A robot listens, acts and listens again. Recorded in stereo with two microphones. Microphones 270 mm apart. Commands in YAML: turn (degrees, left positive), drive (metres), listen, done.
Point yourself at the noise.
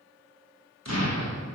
turn: 75
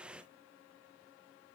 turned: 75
listen: true
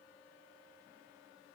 done: "I heard an explosion, but can't make it out now. It was about straight ahead or 30° left."